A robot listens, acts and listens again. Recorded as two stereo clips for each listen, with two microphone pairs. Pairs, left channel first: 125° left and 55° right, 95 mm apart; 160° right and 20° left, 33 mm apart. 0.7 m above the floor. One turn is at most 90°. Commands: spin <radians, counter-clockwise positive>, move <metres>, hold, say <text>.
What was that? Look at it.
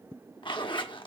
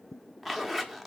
spin 1.57
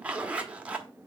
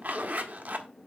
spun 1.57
spin 0.35
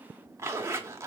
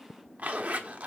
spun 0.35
say Found it: a zipper, straight ahead.